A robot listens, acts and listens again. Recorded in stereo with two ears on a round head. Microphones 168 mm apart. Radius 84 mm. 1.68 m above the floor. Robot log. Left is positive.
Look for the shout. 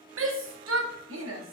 cmd yaw -90
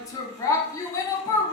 note: So it is at 20° left.
cmd yaw +20
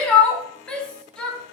end: Found it: a shout, straight ahead.